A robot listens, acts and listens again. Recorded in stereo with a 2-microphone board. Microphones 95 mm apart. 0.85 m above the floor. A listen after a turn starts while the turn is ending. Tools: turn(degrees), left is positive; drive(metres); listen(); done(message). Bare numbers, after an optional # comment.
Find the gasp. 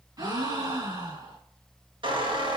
# The gasp: about 45° right or 135° right.
turn(-45)
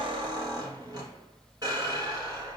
listen()
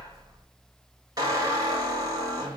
done("I heard a gasp, but can't make it out now. It was about straight ahead or 90° right.")